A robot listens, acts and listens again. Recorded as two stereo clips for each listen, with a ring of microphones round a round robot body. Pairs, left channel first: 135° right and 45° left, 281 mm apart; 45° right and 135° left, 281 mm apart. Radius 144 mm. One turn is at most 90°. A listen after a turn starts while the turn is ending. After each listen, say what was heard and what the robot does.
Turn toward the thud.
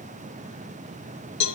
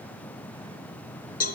Keep listening.
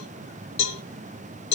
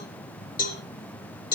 Keep listening.
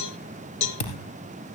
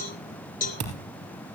The thud: 175° left. Turn 90° left.
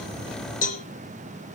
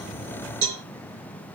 Nothing new. It was at 85° left. Turn 85° left.
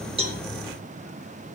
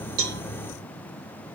I heard a thud from this way, but can't make it out now.